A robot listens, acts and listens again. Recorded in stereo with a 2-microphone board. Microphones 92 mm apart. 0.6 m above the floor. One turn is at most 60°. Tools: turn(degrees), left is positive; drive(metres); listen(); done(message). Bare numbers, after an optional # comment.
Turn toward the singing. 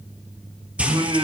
# The singing: about 60° right or 120° right.
turn(-60)
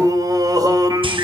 # So it is at 50° right.
turn(-50)
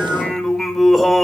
done("Facing the singing, 2 to 4 m away.")